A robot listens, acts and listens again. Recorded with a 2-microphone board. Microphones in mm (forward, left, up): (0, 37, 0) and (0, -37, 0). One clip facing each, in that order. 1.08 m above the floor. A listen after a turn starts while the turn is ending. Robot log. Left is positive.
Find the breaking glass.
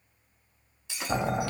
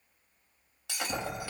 note: The breaking glass: about 70° right or 110° right.
cmd yaw -70
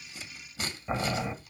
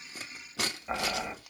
cmd idle
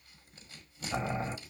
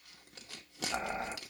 end: I heard breaking glass, but can't make it out now. It was about straight ahead or 40° right.